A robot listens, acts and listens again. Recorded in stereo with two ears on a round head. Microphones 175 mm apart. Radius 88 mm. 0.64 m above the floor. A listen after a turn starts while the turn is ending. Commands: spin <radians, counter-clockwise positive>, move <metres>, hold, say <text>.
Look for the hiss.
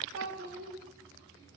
hold
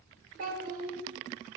hold
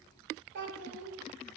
say I can't make out a hiss, only a child speaking.